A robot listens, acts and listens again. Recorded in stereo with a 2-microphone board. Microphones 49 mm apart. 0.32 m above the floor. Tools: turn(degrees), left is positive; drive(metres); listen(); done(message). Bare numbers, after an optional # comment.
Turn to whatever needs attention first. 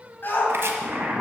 # The shout: about 45° left or 135° left.
turn(45)
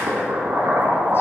listen()
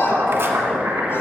listen()
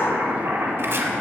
done("I heard a shout, but can't make it out now. It was about straight ahead or 90° left.")